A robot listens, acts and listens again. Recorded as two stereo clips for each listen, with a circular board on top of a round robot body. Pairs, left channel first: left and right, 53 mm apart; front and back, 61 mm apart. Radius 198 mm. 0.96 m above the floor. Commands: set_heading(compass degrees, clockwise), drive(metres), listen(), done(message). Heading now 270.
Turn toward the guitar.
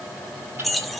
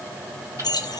listen()
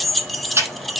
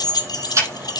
listen()
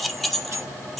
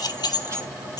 done("I can't make out a guitar, only ticking and keys jangling.")